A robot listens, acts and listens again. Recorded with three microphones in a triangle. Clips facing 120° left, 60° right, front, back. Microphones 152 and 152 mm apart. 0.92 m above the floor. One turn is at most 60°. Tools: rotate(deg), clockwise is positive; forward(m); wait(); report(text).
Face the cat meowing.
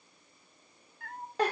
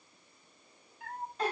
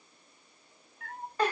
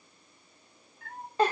report("Facing the cat meowing, 1 to 2 m away.")